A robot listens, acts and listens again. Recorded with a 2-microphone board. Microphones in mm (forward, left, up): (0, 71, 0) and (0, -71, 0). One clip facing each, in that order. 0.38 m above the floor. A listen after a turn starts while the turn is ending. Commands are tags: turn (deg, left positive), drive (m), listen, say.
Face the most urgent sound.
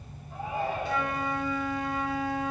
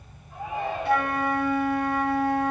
<turn deg="30"/>
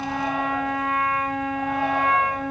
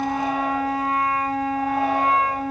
<listen/>
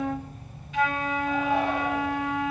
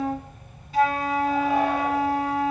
<listen/>
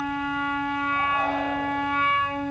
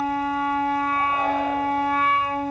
<say>I heard a shout, but can't make it out now. It was about straight ahead or 120° left.</say>